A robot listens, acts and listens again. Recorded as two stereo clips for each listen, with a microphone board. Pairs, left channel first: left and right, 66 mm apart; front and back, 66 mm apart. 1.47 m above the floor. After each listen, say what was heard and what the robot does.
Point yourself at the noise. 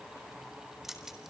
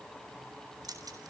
The keys jangling: 175° right. Turn 175° right.
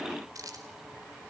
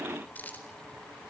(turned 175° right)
The keys jangling is now 65° right. Turn 65° right.
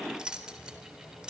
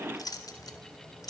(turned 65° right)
The keys jangling is now 10° right. Turn 10° right.
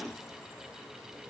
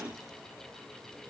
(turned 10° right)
Keep listening.
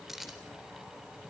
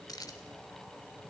Facing the keys jangling.